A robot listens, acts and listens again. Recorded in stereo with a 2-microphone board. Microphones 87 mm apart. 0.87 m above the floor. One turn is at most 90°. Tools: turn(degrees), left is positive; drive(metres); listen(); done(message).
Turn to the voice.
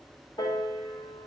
listen()
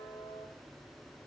listen()
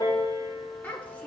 turn(degrees=20)
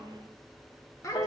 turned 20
turn(degrees=90)
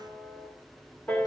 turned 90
turn(degrees=50)
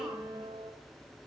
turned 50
listen()
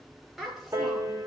done("Found it: a child speaking, straight ahead, 2 to 4 m away.")